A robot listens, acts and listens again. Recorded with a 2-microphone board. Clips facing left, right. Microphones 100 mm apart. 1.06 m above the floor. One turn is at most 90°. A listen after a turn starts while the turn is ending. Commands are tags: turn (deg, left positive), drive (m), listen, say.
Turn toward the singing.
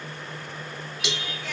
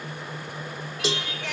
<turn deg="-90"/>
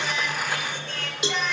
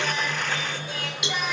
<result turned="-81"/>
<turn deg="-10"/>
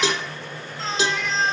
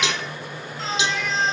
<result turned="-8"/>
<say>Found it: singing, straight ahead, over 4 m away.</say>